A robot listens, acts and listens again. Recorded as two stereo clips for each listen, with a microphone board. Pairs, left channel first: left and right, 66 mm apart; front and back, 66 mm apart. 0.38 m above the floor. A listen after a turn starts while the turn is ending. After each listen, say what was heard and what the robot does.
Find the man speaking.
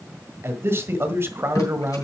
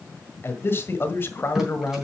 The man speaking: 45° right. Turn 45° right.
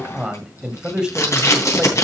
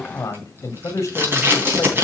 The man speaking is now 15° right. Turn 15° right.
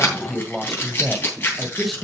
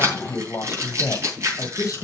Found it: a man speaking, straight ahead, 1 to 2 m away.